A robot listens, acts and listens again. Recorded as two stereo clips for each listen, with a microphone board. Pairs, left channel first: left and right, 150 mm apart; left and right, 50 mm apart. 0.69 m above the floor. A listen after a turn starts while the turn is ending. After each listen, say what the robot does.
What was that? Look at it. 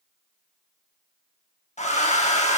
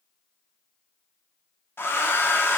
Turn 50° left.
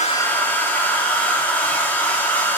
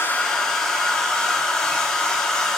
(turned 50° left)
Turn 15° left.
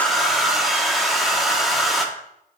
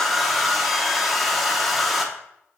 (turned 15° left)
Facing the hair dryer.